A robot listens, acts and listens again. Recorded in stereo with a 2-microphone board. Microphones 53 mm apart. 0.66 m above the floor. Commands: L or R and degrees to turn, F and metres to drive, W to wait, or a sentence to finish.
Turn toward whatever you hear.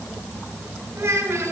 R65
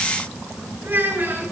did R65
R45
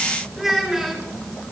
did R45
R10
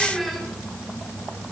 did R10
Found it: a child speaking, straight ahead.